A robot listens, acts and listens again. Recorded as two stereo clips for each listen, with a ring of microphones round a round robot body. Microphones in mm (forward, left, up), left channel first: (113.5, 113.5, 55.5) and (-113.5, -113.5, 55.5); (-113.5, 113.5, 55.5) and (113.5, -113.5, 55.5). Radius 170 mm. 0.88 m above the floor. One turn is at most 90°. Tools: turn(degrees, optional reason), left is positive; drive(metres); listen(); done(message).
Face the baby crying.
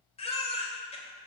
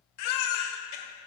turn(degrees=90, reason="The baby crying: 115° left.")
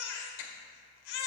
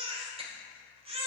turn(degrees=30, reason="The baby crying is now 30° left.")
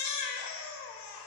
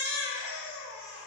done("Found it: a baby crying, straight ahead, 1 to 2 m away.")